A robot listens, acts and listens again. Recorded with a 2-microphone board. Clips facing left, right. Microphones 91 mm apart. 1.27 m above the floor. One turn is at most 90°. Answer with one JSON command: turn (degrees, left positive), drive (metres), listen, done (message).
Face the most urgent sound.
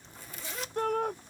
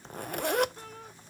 {"turn": 65}
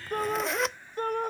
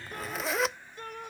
{"turn": 50}
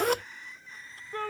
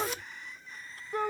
{"turn": -15}
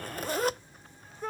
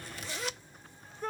{"done": "Found it: a shout, straight ahead."}